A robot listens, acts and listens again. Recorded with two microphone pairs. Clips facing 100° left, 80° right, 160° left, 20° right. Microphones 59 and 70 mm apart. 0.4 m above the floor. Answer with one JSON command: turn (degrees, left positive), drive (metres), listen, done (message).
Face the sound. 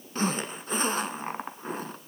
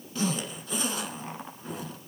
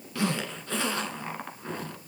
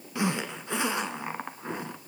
{"turn": 50}
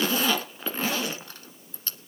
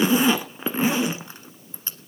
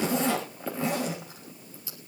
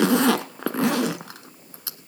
{"turn": -10}
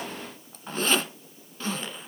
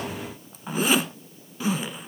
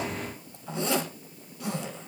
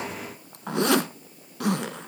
{"done": "Facing the zipper."}